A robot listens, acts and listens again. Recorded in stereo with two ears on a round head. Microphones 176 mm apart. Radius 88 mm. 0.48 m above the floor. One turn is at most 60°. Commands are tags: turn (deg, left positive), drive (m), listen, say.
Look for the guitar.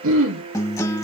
<turn deg="15"/>
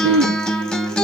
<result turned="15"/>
<say>Found it: a guitar, straight ahead.</say>